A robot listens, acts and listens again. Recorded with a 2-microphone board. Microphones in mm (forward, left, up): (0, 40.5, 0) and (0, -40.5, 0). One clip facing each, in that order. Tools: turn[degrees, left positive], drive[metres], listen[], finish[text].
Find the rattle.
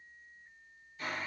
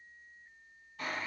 Action: listen[]
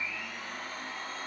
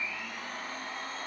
Action: listen[]
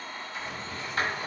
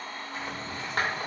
Thought: The rattle: about 55° right or 125° right.
Action: turn[-55]
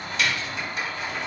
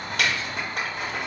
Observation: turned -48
Thought: So it is at 75° right.
Action: turn[-75]
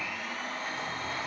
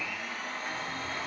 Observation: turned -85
Thought: Nothing new. It was at 10° left.
Action: turn[10]
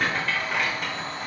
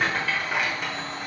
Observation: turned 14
Action: finish[Facing the rattle, 1 to 2 m away.]